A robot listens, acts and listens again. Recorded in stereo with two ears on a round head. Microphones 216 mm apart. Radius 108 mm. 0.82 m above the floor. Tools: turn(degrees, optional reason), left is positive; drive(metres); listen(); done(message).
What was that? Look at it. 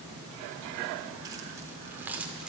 turn(degrees=-30)
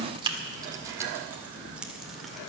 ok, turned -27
turn(degrees=-30)
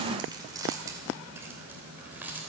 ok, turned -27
turn(degrees=-30)
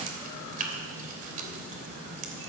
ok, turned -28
turn(degrees=-145, reason="So it is at 145° right.")
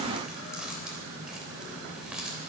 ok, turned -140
done("Facing the keys jangling.")